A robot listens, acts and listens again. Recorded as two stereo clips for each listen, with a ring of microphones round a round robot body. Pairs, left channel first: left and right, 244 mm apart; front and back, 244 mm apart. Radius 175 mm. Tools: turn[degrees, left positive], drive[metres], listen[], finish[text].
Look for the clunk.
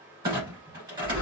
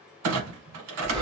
Thought: The clunk: 170° right.
Action: turn[-170]
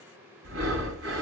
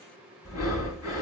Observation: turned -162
Action: finish[Facing where the clunk came from. I can't hear it now.]